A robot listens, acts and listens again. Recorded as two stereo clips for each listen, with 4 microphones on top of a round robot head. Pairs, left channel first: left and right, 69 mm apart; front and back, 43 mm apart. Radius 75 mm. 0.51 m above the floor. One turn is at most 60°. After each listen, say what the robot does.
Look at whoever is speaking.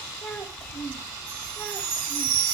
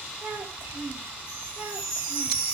Turn 60° left.
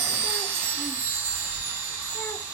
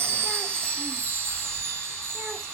Turn 60° left.
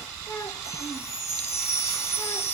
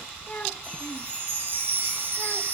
Turn 60° left.
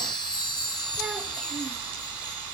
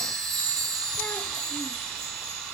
Keep listening.
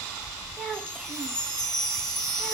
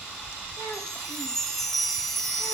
Found it: a child speaking, straight ahead.